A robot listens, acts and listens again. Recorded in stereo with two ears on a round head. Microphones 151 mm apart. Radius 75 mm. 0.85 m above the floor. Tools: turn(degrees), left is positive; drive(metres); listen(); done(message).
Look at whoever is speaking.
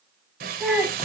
turn(degrees=30)
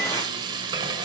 listen()
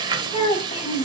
turn(degrees=145)
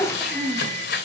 done("Found it: a child speaking, straight ahead, over 4 m away.")